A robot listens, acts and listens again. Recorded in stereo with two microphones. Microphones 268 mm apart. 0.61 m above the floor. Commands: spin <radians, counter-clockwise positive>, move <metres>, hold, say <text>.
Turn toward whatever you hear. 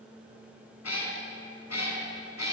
spin 1.57
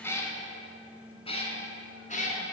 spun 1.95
spin 0.52
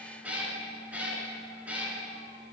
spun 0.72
say Facing the cat meowing.